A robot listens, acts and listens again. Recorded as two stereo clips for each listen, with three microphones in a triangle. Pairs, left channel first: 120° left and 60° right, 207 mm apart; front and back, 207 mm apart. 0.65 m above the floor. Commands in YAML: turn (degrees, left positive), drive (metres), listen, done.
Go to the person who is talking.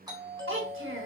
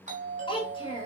turn: -65
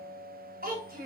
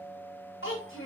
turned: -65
turn: -15
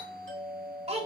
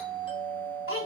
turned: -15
drive: 1.0
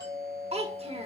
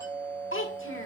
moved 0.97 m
drive: 1.0
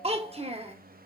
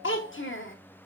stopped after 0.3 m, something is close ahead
done: "I am next to the child speaking."